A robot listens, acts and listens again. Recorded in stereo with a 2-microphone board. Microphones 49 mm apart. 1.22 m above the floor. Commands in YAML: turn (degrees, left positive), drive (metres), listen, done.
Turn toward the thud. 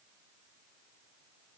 listen: true
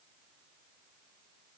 listen: true
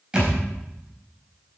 turn: -15
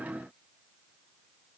listen: true
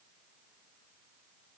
done: "I heard a thud, but can't make it out now. It was about straight ahead or 150° right."